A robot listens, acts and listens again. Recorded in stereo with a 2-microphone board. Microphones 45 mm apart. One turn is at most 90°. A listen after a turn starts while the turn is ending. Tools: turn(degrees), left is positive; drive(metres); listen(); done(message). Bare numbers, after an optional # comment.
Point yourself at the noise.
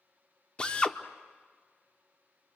# The drill: about 25° left or 155° left.
turn(25)
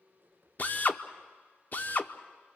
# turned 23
# So it is at 130° left.
turn(90)
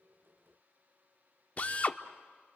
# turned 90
# The drill is now 40° left.
turn(40)
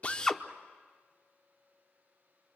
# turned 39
listen()
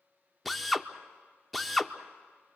done("Facing the drill.")